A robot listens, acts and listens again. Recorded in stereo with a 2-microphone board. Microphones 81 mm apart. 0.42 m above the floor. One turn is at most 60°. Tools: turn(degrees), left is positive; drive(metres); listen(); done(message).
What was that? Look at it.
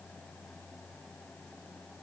listen()
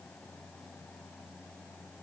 listen()
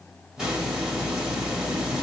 turn(degrees=-30)
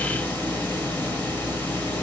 turn(degrees=20)
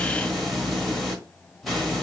done("Facing the hiss, 1 to 2 m away.")